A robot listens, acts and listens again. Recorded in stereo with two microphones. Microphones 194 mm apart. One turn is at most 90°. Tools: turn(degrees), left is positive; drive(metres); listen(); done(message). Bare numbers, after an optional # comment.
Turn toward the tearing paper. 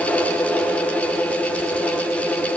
listen()
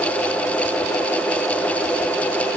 listen()
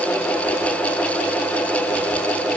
done("I can't make out tearing paper.")